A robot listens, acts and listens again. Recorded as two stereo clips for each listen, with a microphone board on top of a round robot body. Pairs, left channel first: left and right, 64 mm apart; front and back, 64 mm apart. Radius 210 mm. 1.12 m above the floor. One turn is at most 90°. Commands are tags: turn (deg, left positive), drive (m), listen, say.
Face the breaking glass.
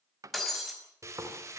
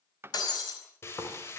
<say>Found it: breaking glass, straight ahead, over 4 m away.</say>